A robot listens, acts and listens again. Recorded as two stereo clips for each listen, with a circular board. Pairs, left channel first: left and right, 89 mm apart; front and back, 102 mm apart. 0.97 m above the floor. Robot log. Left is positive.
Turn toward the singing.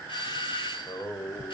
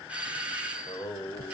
note: The singing: 45° left.
cmd yaw +45
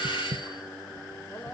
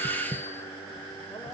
note: The singing is now 35° left.
cmd yaw +35
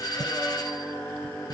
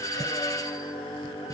note: The singing is now 25° left.
cmd yaw +25
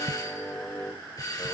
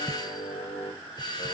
note: The singing is now 25° left.
cmd yaw +25
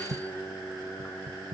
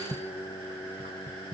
end: Found it: singing, straight ahead.